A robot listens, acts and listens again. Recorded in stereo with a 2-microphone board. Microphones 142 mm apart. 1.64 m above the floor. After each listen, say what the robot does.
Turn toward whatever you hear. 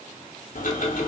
Turn 75° left.
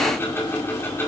Turn 20° left.
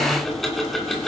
Found it: ticking, straight ahead.